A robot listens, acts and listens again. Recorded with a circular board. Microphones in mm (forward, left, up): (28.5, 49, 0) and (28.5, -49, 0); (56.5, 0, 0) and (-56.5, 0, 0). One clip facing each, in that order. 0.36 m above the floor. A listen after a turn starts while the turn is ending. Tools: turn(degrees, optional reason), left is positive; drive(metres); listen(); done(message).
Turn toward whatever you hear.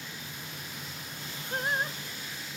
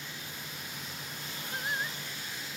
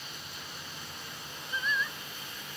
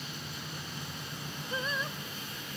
turn(degrees=130, reason="The singing: 130° left.")
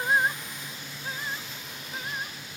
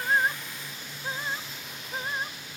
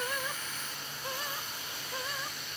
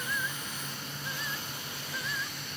turn(degrees=-35, reason="The singing is now 35° right.")
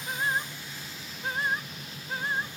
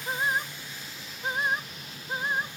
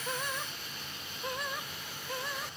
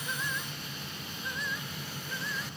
turn(degrees=-20, reason="The singing is now 20° right.")
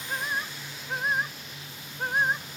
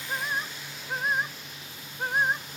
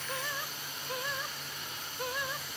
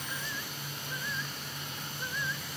done("Found it: singing, straight ahead.")